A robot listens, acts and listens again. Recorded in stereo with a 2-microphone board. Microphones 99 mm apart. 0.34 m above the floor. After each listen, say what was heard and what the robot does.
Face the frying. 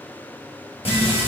The frying: about 75° left or 105° left. Turn 75° left.
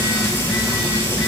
So it is at 30° left. Turn 30° left.
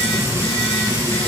The frying is now 35° right. Turn 35° right.
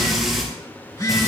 Found it: frying, straight ahead.